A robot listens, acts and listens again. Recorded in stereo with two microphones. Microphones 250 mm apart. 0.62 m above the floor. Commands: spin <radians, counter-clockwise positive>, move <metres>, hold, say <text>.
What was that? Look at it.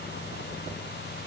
hold
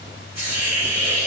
spin -0.52
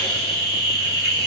spin 0.44
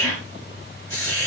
say Found it: a hiss, straight ahead.